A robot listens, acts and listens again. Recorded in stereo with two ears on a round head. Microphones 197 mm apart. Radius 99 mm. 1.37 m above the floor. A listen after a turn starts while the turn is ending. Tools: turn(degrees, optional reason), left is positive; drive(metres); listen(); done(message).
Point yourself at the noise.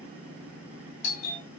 turn(degrees=30, reason="The doorbell: about 30° left or 150° left.")
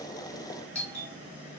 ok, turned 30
done("Found it: a doorbell, straight ahead.")